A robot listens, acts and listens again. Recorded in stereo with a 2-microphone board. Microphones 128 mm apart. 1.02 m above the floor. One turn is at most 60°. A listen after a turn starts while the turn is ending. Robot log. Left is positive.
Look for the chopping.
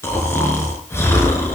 cmd idle
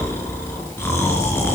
cmd idle
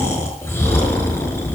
end: I can't make out chopping, only snoring.